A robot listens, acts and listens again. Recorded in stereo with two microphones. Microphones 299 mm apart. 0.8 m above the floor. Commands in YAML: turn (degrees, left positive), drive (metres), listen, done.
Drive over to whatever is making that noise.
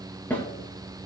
turn: 30
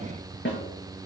turn: 140
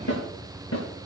turn: 60
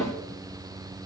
turn: 10
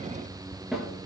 drive: 1.0
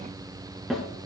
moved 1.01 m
drive: 1.0
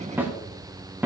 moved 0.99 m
drive: 1.0
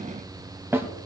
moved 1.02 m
turn: -10
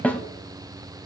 drive: 1.0
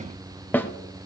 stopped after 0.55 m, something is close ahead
done: "I am next to the snare drum."